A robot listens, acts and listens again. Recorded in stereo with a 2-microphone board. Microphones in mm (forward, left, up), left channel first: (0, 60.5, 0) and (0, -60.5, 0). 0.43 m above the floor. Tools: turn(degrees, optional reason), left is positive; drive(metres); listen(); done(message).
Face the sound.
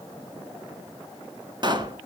turn(degrees=-40, reason="The pop: about 40° right or 140° right.")
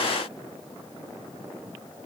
listen()
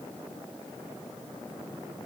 done("I heard a pop, but can't make it out now. It was about straight ahead or 100° right.")